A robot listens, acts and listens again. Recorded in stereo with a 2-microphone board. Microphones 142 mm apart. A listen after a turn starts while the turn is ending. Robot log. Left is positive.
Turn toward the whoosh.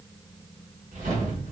note: The whoosh: about 65° right or 115° right.
cmd yaw -65
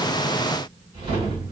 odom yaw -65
note: So it is at 40° right.
cmd yaw -40
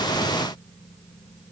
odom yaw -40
cmd idle
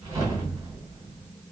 note: The whoosh is now 25° right.
cmd yaw -25
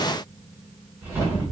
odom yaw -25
note: The whoosh is now 15° right.
cmd yaw -15
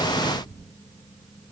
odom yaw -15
end: Facing the whoosh.